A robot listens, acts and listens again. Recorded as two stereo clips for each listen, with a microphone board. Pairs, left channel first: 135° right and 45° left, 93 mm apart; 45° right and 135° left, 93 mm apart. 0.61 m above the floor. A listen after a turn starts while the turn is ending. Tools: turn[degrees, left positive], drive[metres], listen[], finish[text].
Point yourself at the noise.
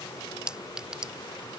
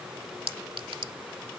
Thought: The clink: 125° left.
Action: turn[125]
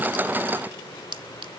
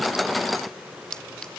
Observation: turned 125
Thought: The clink is now 35° left.
Action: turn[35]
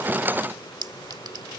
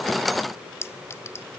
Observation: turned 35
Thought: The clink is now 15° left.
Action: turn[15]
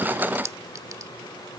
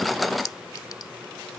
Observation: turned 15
Action: finish[Facing the clink.]